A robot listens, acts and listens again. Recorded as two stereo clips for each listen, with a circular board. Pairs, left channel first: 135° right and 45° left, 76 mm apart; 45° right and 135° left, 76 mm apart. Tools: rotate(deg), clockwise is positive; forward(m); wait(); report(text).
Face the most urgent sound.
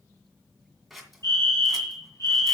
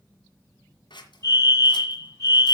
rotate(90)
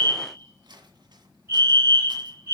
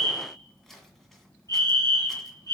report("Found it: a fire alarm, straight ahead, over 4 m away.")